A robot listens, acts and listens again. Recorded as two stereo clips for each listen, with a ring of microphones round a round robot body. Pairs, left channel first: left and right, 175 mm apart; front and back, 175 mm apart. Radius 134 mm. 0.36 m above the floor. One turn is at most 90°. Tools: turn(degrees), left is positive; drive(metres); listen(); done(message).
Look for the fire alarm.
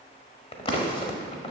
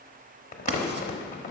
listen()
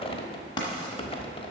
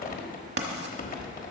listen()
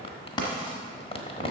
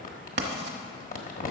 done("I can't make out a fire alarm to turn to.")